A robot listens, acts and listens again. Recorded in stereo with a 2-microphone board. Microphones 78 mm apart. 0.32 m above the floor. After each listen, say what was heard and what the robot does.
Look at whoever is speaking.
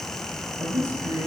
Turn 90° right.
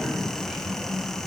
So it is at 10° right. Turn 10° right.
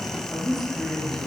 Found it: a man speaking, straight ahead.